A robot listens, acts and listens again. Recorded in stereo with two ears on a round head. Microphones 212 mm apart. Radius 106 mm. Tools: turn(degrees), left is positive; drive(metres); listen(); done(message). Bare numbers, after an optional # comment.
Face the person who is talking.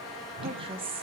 # The woman speaking: about 25° right or 155° right.
turn(-25)
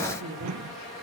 # So it is at 125° right.
turn(-125)
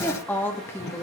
# The woman speaking is now 10° left.
turn(10)
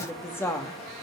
# The woman speaking is now 10° left.
turn(10)
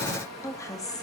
# The woman speaking is now 15° left.
turn(15)
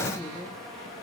done("Found it: a woman speaking, straight ahead.")